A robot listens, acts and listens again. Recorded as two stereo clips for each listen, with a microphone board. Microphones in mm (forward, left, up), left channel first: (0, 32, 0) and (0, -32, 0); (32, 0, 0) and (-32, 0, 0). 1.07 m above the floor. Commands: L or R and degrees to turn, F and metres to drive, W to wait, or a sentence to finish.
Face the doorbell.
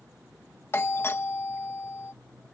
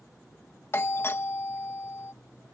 L45
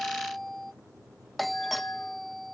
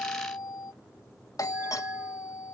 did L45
Facing the doorbell.